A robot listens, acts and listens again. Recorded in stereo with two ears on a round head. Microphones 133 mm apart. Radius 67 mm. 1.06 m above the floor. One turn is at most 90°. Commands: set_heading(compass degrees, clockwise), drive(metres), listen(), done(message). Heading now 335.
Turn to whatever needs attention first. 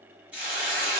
listen()
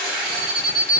set_heading(300)
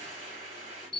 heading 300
done("Found it: an alarm, straight ahead, 1 to 2 m away.")